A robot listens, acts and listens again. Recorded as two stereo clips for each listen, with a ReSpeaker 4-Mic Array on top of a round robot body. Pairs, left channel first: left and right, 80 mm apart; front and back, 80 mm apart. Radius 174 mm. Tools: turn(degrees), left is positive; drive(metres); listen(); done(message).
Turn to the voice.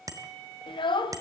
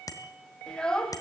turn(degrees=80)
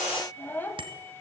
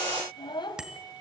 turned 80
turn(degrees=25)
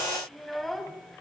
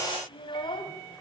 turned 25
done("Facing the child speaking.")